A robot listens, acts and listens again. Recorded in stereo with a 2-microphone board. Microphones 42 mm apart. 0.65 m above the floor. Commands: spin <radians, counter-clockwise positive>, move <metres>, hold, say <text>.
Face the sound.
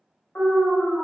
spin 0.96
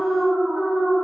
spin 0.87
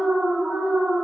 spin -0.35
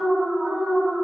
say Facing the alarm.